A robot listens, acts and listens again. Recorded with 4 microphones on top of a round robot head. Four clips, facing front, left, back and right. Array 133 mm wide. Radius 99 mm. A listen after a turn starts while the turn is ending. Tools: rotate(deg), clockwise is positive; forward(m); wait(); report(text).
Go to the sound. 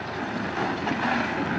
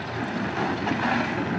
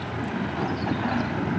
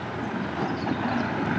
wait()
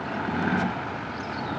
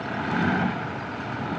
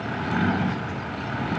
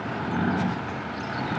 wait()
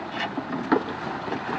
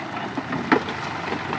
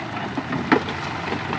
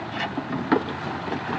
report("I can't make out anything to turn to.")